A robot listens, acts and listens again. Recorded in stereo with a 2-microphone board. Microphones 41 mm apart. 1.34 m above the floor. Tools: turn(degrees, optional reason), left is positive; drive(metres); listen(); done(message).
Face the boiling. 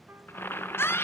turn(degrees=65, reason="The boiling: about 65° left or 115° left.")
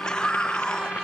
listen()
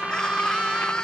listen()
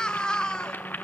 turn(degrees=50, reason="So it is at 50° left.")
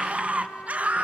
listen()
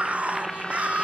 done("Facing the boiling, under 1 m away.")